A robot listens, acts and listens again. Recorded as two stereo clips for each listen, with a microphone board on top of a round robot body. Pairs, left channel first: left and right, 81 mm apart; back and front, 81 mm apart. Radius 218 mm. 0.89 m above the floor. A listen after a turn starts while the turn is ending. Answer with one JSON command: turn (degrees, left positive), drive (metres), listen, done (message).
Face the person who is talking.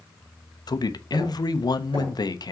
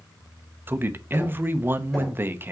{"turn": 60}
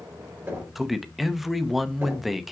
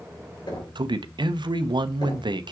{"done": "Found it: a man speaking, straight ahead."}